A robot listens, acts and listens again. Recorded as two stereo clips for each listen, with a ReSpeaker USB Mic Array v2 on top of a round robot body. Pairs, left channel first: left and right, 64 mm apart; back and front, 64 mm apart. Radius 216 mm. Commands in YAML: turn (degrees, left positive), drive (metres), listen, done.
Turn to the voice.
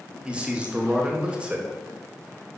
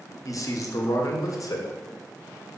turn: -160
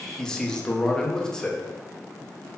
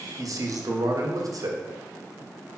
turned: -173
turn: 10
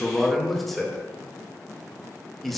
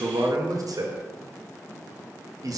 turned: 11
done: "Facing the man speaking."